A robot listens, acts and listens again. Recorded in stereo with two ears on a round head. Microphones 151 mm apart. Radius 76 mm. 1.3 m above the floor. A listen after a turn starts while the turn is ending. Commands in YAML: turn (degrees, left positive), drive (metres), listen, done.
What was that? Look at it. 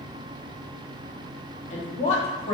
turn: 40
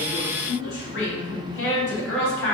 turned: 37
turn: 100
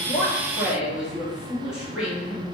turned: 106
done: "Facing the woman speaking."